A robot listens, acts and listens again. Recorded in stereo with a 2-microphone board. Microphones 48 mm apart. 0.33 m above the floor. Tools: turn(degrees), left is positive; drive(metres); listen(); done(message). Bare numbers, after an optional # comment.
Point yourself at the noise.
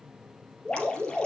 # The dripping: about 20° left or 160° left.
turn(20)
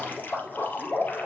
# So it is at 140° left.
turn(140)
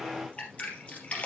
# The dripping is now 25° left.
turn(25)
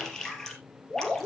# The dripping is now 10° left.
turn(10)
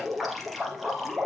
done("Facing the dripping.")